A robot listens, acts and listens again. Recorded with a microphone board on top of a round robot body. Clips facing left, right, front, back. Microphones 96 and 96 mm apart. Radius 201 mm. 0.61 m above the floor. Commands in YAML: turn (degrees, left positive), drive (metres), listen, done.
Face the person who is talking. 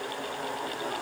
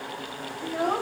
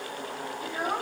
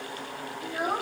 turn: -100
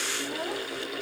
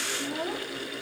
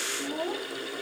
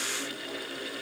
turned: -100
done: "Found it: a child speaking, straight ahead, 1 to 2 m away."